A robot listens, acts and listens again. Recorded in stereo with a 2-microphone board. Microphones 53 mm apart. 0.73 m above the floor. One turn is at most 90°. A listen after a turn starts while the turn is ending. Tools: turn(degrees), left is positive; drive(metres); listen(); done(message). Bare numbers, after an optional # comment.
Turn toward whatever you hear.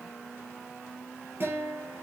# The guitar: about 50° right or 130° right.
turn(-50)
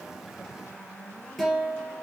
done("Facing the guitar, 2 to 4 m away.")